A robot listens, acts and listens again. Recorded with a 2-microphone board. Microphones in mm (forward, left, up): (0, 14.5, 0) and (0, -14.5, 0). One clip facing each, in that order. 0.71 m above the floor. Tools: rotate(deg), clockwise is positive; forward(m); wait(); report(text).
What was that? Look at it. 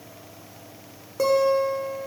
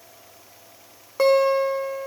rotate(40)
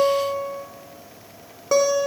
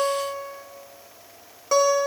report("Facing the guitar.")